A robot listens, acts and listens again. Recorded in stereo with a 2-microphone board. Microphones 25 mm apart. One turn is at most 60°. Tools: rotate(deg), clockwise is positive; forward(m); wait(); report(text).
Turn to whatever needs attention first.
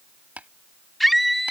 rotate(-30)
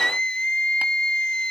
rotate(-60)
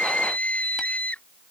rotate(-60)
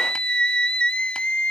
rotate(-40)
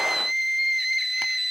report("Found it: a scream, straight ahead.")